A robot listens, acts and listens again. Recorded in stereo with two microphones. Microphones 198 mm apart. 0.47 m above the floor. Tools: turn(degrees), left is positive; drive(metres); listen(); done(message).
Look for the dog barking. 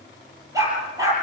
turn(degrees=-15)
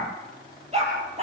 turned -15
turn(degrees=-150)
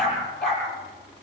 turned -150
done("Found it: a dog barking, straight ahead, over 4 m away.")